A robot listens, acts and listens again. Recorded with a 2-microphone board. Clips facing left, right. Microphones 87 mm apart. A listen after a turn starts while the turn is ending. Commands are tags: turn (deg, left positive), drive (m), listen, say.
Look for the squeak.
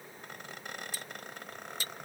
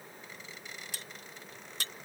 <turn deg="55"/>
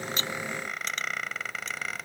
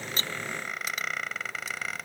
<say>Facing the squeak.</say>